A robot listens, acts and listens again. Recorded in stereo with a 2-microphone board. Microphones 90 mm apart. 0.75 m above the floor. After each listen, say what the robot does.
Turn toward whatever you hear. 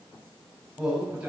Turn 30° right.
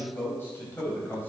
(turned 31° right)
Turn 20° left.
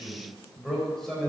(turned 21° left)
Facing the man speaking, 2 to 4 m away.